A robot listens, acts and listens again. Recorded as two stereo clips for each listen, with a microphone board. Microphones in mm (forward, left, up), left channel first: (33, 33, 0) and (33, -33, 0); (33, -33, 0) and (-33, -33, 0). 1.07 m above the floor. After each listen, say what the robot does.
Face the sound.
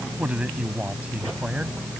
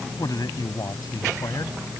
Turn 20° right.
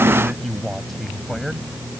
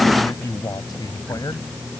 Found it: a man speaking, straight ahead.